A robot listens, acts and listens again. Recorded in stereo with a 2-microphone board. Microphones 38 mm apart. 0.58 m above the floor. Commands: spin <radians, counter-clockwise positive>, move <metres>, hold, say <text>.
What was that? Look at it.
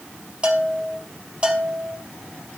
spin -0.44
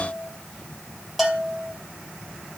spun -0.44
say Found it: a bell, straight ahead.